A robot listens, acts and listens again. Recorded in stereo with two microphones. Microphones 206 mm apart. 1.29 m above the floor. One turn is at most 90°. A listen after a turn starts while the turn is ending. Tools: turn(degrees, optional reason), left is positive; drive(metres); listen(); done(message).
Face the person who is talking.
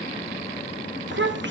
turn(degrees=-60, reason="The child speaking: about 60° right or 120° right.")
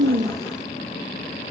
listen()
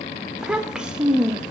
done("Facing the child speaking, 1 to 2 m away.")